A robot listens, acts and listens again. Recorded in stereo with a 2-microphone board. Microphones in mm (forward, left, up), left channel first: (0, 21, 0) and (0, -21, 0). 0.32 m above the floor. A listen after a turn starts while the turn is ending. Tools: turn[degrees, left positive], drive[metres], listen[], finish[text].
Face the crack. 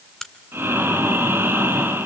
Action: turn[30]
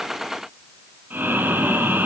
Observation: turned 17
Action: listen[]
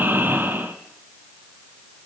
Action: finish[I heard a crack, but can't make it out now. It was about 5° right or 155° left.]